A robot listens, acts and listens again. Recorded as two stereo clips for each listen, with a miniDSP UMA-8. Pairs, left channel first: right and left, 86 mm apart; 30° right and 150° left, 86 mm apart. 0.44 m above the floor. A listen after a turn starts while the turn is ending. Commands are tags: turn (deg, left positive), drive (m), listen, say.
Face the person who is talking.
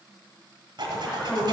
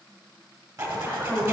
<turn deg="-165"/>
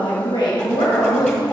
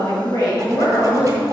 <turn deg="-70"/>
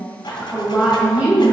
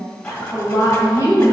<turn deg="10"/>
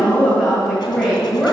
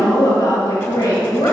<say>Found it: a woman speaking, straight ahead.</say>